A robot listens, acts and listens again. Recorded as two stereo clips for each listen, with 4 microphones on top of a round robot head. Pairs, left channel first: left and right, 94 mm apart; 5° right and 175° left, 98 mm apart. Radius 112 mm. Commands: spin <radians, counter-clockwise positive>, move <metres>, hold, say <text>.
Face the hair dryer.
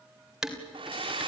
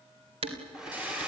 spin -1.75
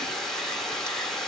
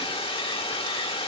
say Found it: a hair dryer, straight ahead.